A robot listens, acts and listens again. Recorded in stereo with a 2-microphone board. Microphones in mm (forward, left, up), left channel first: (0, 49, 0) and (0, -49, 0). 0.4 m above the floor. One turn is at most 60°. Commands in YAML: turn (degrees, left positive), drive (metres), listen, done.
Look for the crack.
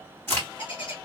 turn: 25
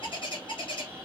listen: true
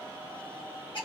done: "I heard a crack, but can't make it out now. It was about straight ahead or 130° left."